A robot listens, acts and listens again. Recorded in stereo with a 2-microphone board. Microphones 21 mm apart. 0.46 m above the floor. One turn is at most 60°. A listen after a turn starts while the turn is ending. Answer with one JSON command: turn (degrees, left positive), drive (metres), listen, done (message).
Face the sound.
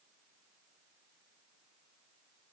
{"listen": true}
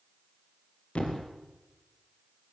{"turn": 60}
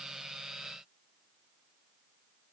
{"turn": 30}
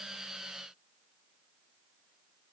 {"done": "Facing where the thud came from. I can't hear it now."}